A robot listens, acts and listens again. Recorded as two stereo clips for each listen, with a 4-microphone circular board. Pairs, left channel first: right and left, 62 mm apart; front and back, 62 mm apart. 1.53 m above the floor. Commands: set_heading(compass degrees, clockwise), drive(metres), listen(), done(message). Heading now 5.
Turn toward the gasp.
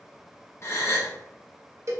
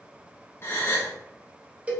set_heading(50)
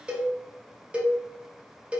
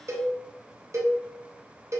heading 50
done("I heard a gasp from this way, but can't make it out now.")